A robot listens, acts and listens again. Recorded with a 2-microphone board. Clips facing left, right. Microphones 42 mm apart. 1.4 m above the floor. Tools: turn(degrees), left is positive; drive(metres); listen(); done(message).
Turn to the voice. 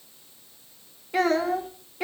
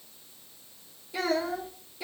turn(degrees=55)
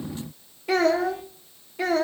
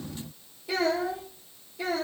turn(degrees=85)
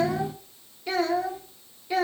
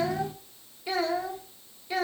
done("Found it: a child speaking, straight ahead.")